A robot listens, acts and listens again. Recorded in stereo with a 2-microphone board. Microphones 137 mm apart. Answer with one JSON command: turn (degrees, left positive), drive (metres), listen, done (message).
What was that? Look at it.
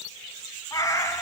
{"turn": 20}
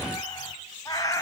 {"turn": 25}
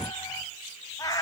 {"turn": 25}
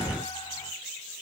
{"listen": true}
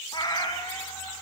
{"turn": 30}
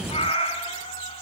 {"turn": 130}
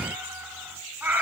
{"turn": -15}
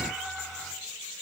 {"done": "Facing the cat meowing."}